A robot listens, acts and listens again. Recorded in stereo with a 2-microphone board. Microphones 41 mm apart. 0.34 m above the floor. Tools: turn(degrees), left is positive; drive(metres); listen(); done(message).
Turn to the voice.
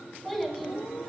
turn(degrees=30)
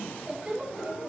turn(degrees=-30)
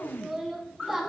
turn(degrees=-10)
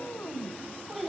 done("Facing the child speaking, 2 to 4 m away.")